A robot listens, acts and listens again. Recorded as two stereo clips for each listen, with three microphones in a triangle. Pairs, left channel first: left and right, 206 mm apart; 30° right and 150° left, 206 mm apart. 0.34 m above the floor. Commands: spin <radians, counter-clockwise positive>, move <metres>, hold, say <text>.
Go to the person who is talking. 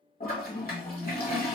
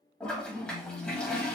spin 2.01
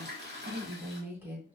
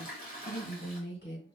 spin -0.17
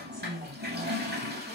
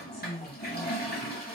move 1.0
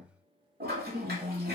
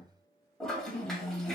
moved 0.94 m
move 1.0
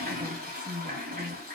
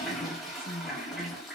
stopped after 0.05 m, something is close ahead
say I am next to the woman speaking.